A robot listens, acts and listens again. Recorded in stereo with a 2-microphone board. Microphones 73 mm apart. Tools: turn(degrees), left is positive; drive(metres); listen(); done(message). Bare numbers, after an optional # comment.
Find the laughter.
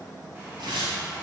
listen()
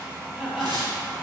turn(-30)
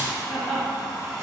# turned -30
done("Found it: laughter, straight ahead.")